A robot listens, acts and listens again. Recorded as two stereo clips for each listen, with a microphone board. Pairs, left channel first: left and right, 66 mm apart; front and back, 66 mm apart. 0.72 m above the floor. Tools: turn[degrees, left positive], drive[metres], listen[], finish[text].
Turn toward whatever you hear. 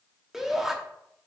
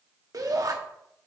Thought: The shout: 175° right.
Action: turn[-175]
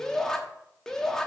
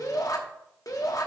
Thought: The shout is now 10° left.
Action: turn[10]
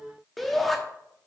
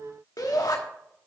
Action: finish[Facing the shout.]